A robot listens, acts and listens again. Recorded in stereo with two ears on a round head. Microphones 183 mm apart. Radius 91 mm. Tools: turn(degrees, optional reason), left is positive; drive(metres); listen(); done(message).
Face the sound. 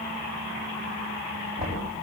turn(degrees=-35, reason="The knocking: about 35° right or 145° right.")
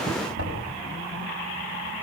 turn(degrees=-110, reason="So it is at 110° right.")
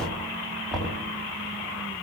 done("Facing the knocking, over 4 m away.")